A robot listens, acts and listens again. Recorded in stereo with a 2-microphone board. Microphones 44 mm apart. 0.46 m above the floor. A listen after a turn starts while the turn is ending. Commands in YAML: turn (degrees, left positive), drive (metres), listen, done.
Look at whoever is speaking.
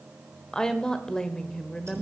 turn: 15
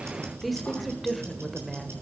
done: "Found it: a woman speaking, straight ahead."